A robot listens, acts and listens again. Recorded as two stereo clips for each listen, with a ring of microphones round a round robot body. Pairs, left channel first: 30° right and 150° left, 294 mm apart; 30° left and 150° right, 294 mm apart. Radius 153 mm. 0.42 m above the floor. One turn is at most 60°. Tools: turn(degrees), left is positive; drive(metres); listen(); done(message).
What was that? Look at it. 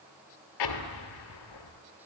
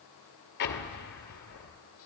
turn(degrees=-25)
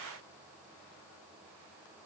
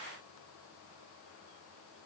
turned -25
done("Facing where the explosion came from. I can't hear it now.")